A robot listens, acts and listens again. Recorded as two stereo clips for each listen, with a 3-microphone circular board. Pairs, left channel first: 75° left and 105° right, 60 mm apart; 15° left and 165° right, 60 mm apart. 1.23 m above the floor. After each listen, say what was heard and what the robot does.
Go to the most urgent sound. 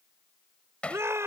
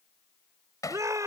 The shout: 145° right. Turn 145° right.
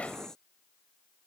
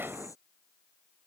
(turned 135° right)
Nothing new. It was at 10° right. Turn 10° right.
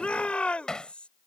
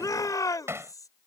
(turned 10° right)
Drive 1.0 m forward.
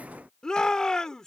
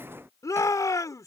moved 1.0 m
Drive 1.0 m forward.
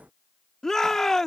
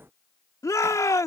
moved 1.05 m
Drive 1.0 m forward.
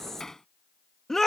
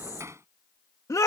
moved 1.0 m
The shout is now 10° right. Turn 10° right.
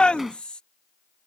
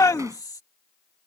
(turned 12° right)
Drive 1.0 m forward.
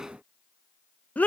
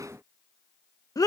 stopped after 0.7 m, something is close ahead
The shout is now 10° left. Turn 10° left.
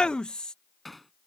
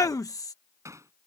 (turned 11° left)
Arrived at the shout, straight ahead.